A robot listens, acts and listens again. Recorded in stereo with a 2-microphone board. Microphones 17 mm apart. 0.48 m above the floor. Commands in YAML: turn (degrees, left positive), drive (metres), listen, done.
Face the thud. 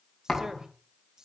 turn: 40
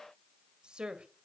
listen: true
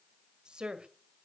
done: "I heard a thud, but can't make it out now. It was about straight ahead or 100° left."